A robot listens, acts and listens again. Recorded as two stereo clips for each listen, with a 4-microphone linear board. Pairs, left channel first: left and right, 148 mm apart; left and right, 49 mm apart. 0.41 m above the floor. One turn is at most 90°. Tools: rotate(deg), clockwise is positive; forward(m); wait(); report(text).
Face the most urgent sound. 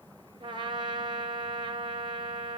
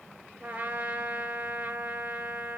wait()
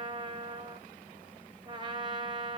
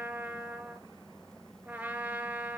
wait()
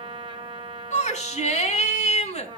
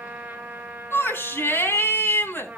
rotate(-55)
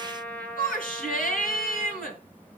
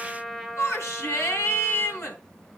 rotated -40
rotate(-80)
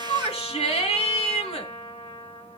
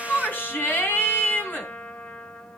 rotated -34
rotate(-45)
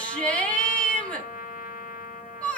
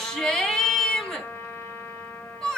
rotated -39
rotate(-10)
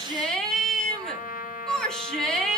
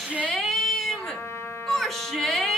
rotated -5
report("Facing the shout.")